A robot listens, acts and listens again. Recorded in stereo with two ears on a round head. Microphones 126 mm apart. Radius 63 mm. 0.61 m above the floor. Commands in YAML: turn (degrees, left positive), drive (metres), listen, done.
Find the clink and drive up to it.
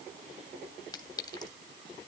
turn: 25
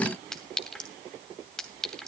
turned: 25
drive: 1.0
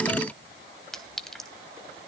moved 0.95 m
drive: 1.0
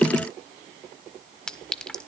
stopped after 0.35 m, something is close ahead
done: "I am next to the clink."